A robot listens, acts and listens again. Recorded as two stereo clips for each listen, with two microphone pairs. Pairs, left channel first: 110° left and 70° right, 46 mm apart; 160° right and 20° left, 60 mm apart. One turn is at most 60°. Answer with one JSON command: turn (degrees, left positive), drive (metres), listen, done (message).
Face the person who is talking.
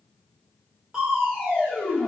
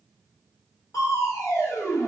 {"listen": true}
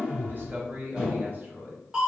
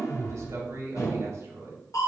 {"turn": -20}
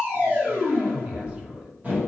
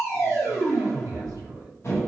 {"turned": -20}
{"listen": true}
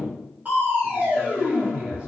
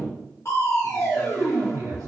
{"listen": true}
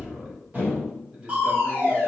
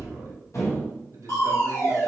{"done": "Found it: a man speaking, straight ahead."}